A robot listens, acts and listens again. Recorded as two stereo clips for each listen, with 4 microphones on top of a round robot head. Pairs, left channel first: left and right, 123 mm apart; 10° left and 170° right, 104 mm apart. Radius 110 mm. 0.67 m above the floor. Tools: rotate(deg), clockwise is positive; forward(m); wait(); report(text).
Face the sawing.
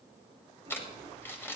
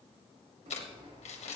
rotate(150)
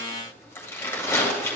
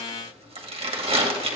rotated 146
wait()
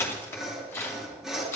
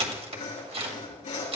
report("Found it: sawing, straight ahead.")